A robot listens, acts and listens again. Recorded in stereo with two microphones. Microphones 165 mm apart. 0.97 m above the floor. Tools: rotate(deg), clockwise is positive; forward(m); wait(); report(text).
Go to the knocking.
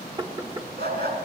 rotate(30)
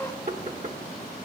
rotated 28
rotate(120)
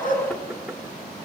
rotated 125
wait()
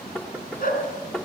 forward(1.0)
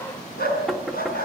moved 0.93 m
forward(1.0)
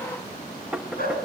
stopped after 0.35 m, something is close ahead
rotate(10)
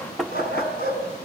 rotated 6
report("Arrived at the knocking, straight ahead.")